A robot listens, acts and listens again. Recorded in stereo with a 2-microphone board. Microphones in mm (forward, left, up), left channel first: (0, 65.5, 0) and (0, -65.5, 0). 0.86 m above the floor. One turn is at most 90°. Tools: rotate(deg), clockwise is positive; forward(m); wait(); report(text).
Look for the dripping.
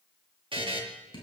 rotate(-40)
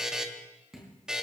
report("Found it: dripping, straight ahead, over 4 m away.")